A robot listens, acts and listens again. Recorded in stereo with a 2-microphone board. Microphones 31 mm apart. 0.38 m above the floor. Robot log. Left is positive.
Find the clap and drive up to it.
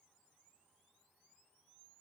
cmd idle
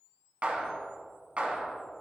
note: The clap: about 50° right or 130° right.
cmd yaw -50
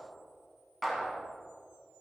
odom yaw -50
cmd fwd 1.0
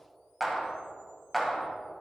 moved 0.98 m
cmd fwd 1.0
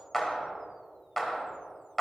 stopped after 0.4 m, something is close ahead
end: Arrived at the clap, straight ahead.